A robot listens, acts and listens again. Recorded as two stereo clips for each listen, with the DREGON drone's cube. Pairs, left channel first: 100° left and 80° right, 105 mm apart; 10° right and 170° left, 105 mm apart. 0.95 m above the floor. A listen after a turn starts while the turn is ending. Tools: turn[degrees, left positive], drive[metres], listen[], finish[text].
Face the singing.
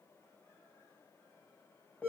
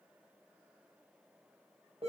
Action: listen[]
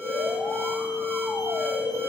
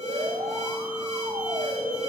Action: listen[]
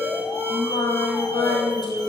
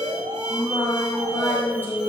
Thought: The singing: 60° left.
Action: turn[60]
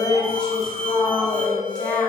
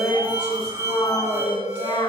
Thought: The singing is now 15° left.
Action: turn[15]
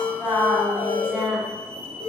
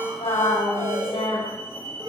Action: finish[Facing the singing, over 4 m away.]